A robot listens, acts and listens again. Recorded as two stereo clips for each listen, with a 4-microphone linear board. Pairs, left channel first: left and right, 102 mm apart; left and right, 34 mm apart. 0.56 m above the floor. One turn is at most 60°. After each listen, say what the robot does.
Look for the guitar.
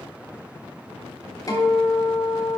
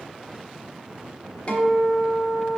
Turn 35° left.
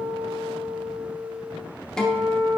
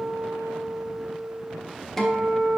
Turn 10° left.
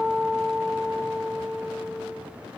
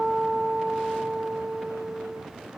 Facing the guitar, 1 to 2 m away.